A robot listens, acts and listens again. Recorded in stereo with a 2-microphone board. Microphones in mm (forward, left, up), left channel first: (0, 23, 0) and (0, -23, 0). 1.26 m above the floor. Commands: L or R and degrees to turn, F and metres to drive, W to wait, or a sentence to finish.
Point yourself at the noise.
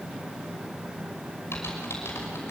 L65
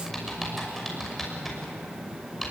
Facing the typing on a keyboard, over 4 m away.